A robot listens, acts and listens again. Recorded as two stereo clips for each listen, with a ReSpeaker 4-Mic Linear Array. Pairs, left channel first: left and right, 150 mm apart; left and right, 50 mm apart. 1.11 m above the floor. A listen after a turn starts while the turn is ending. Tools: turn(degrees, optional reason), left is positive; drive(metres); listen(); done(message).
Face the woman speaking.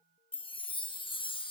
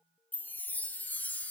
listen()
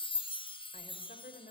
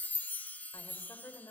turn(degrees=90)
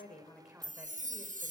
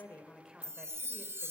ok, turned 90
listen()
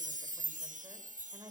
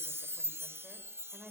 turn(degrees=-25, reason="The woman speaking is now 25° right.")
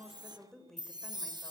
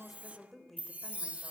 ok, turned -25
done("Facing the woman speaking.")